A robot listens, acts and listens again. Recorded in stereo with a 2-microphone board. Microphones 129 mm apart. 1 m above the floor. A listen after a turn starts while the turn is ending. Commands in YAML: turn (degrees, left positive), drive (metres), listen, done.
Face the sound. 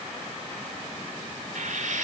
turn: -90
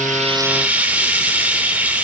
turn: -10
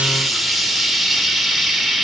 done: "Found it: frying, straight ahead, 2 to 4 m away."